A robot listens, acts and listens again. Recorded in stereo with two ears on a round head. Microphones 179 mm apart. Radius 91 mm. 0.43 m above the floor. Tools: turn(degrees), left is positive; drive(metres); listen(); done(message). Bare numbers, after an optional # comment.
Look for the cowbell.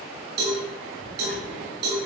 # The cowbell: about 60° right or 120° right.
turn(-60)
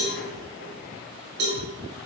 # So it is at 60° right.
turn(-60)
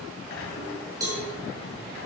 # The cowbell is now 20° right.
turn(-20)
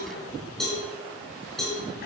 done("Found it: a cowbell, straight ahead.")